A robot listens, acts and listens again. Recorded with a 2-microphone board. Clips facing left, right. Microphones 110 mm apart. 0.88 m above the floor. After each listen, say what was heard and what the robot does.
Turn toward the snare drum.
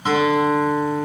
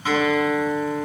Keep listening.
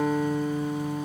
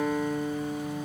Keep listening.
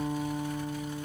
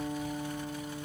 I can't make out a snare drum, only a guitar.